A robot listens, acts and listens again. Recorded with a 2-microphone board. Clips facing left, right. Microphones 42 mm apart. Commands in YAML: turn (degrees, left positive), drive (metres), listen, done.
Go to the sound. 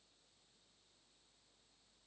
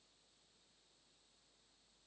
listen: true
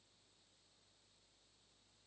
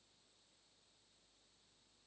listen: true
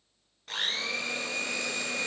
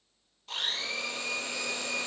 turn: 65
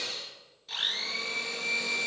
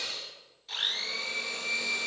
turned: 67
drive: 1.0
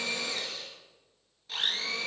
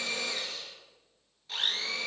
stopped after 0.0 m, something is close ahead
done: "Blocked. The blender is further on, straight ahead."